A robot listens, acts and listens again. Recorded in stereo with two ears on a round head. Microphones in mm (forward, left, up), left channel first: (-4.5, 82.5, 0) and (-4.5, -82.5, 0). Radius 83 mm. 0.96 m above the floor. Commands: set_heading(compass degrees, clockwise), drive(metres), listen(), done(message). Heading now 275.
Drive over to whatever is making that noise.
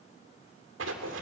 set_heading(5)
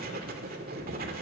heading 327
set_heading(17)
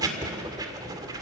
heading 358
set_heading(18)
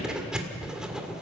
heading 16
drive(1.0)
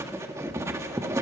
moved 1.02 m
set_heading(31)
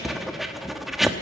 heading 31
drive(1.0)
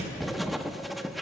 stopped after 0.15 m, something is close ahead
done("I am next to the writing.")